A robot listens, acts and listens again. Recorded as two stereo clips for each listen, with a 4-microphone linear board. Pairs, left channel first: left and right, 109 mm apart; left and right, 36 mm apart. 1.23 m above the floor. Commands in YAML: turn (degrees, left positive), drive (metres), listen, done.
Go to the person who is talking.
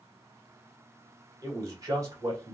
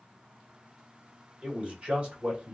turn: -30
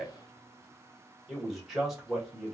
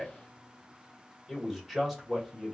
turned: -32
drive: 1.0
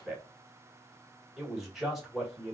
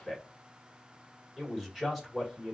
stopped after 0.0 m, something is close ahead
done: "Something is in my way. I am facing the man speaking but have not reached it."